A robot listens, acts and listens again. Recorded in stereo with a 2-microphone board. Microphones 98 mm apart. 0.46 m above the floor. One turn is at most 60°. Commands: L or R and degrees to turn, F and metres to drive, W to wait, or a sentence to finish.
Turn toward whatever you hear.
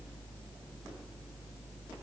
W
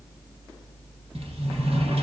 R60
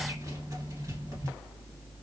R35
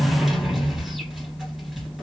Found it: a sliding door, straight ahead.